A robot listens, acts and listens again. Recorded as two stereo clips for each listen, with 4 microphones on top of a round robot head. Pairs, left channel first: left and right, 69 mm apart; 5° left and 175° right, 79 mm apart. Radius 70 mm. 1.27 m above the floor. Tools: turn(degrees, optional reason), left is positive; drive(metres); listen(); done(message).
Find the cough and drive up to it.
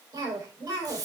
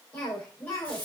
turn(degrees=-65, reason="The cough: 65° right.")
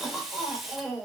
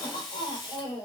drive(metres=1.0)
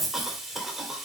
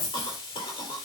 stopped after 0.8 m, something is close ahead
done("Something is in my way. I am facing the cough but have not reached it.")